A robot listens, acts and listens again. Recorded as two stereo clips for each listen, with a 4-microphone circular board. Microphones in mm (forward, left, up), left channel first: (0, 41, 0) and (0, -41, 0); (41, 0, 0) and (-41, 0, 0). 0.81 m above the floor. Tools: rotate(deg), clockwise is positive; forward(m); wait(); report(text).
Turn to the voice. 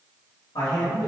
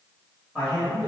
rotate(-90)
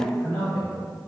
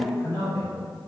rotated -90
rotate(-30)
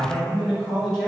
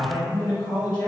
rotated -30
report("Facing the man speaking.")